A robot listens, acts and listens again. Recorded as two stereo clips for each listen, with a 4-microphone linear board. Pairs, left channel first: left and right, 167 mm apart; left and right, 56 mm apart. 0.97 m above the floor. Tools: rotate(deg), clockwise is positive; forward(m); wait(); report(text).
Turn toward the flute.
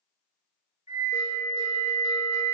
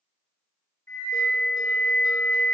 rotate(-60)
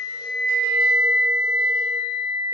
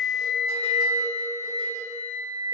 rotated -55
rotate(-65)
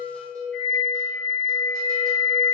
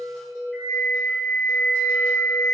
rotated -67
report("Facing the flute, 1 to 2 m away.")